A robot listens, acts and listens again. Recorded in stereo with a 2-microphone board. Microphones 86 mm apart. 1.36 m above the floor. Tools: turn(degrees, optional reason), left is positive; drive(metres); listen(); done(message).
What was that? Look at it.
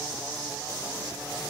listen()
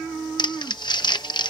turn(degrees=65, reason="The crumpling: about 65° left or 115° left.")
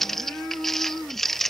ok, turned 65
done("Facing the crumpling.")